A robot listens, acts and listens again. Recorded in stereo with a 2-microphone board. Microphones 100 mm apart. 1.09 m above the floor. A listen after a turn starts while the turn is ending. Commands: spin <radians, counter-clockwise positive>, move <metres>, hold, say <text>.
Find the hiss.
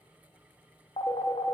hold
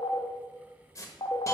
spin 0.52
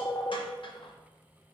hold
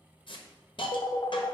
spin 2.09
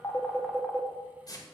spin 0.79
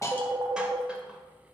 hold
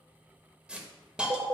spin -0.17
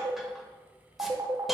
hold
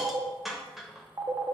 say Facing the hiss.